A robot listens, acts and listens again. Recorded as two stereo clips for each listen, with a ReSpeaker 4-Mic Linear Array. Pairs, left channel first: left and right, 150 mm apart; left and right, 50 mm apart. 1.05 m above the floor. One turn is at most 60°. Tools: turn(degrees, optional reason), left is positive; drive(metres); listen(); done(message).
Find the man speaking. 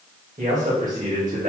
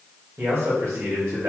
turn(degrees=-60, reason="The man speaking: about 60° right or 120° right.")
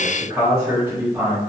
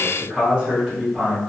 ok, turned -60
turn(degrees=-10, reason="So it is at 10° right.")
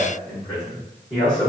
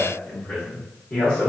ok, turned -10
turn(degrees=10, reason="The man speaking is now 10° left.")
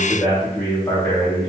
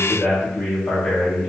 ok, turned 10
turn(degrees=10, reason="The man speaking is now 10° left.")
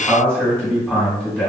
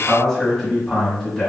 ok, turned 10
done("Facing the man speaking, 2 to 4 m away.")